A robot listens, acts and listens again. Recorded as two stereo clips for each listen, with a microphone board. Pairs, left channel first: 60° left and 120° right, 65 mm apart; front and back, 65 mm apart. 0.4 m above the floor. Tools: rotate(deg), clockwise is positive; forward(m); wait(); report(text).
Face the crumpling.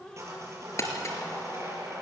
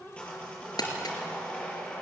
rotate(-10)
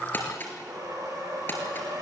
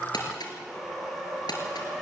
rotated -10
report("Facing the crumpling, over 4 m away.")